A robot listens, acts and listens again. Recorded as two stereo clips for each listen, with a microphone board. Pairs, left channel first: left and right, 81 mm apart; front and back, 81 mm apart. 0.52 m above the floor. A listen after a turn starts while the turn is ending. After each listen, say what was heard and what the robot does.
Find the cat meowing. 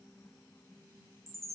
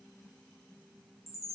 Keep listening.
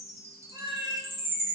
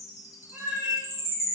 The cat meowing: 105° right. Turn 105° right.
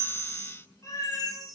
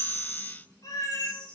The cat meowing is now 45° left. Turn 45° left.
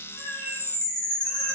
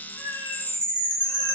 Keep listening.
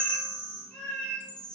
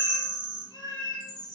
The cat meowing is now 15° left. Turn 15° left.
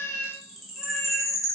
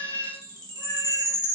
Found it: a cat meowing, straight ahead.